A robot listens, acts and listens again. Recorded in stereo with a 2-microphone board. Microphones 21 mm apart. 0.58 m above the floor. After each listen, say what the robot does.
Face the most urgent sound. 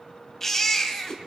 Turn 20° left.
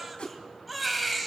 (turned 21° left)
Found it: a baby crying, straight ahead, 2 to 4 m away.